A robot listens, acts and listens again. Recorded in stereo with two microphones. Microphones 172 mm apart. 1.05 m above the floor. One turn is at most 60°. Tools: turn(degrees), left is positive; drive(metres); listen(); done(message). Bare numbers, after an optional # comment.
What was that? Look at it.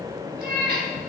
turn(-60)
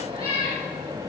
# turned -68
# So it is at 35° right.
turn(-35)
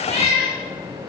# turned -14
# The cat meowing is now 35° right.
turn(-35)
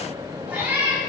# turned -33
# The cat meowing is now 10° right.
turn(-10)
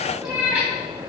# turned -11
done("Found it: a cat meowing, straight ahead, 2 to 4 m away.")